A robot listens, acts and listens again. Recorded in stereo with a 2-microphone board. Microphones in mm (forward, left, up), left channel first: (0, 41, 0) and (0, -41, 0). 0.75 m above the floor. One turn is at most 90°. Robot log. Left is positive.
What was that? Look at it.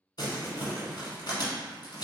note: The crumpling: about 55° left or 125° left.
cmd yaw +55
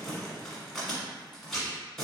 end: Found it: crumpling, straight ahead.